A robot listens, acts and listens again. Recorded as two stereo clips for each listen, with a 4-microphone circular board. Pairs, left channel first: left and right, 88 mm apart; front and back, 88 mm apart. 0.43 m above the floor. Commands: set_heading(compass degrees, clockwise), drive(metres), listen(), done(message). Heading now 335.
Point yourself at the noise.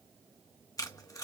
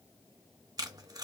set_heading(200)
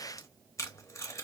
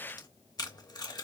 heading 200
set_heading(165)
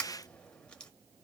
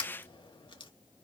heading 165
set_heading(155)
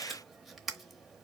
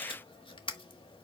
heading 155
done("Facing the tape being pulled.")